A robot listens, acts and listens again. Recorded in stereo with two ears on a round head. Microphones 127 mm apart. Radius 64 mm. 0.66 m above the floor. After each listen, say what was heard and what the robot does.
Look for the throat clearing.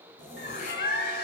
The throat clearing: about 60° left or 120° left. Turn 60° left.
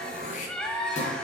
So it is at 55° left. Turn 55° left.
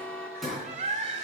Facing the throat clearing, 2 to 4 m away.